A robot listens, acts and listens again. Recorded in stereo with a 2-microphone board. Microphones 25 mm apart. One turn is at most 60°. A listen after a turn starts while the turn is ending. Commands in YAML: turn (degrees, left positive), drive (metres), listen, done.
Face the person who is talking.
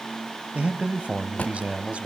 turn: -55
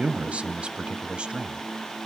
turn: -50
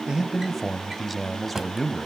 done: "Facing the man speaking."